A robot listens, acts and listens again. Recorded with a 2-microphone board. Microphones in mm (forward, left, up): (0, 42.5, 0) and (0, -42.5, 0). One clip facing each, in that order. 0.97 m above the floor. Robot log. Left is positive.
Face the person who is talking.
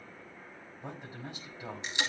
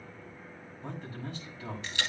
note: The man speaking: about 15° left or 165° left.
cmd yaw +15
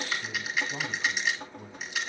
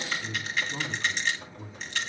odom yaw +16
note: So it is at 150° left.
cmd yaw +150
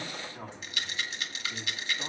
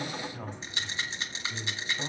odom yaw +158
end: Facing the man speaking.